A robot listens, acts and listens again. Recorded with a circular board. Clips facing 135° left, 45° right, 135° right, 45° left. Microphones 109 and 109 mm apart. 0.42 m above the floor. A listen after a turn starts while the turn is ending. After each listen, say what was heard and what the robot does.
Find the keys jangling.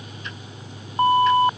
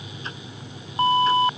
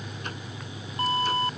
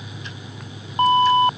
Keep listening.
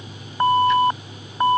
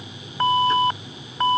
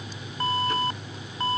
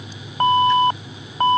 Keep listening.
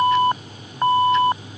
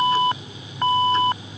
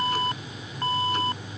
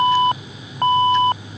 I can't make out keys jangling, only an alarm.